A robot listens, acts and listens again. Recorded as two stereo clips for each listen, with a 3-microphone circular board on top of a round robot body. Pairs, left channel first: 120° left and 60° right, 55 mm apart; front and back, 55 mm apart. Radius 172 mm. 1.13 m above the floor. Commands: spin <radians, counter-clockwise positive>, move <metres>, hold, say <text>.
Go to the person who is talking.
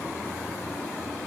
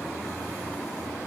hold
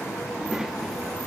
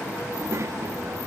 spin -2.44
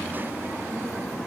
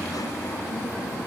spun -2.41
hold
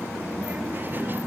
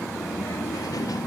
move 1.0
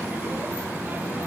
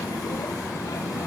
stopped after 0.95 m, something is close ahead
say I am next to the child speaking.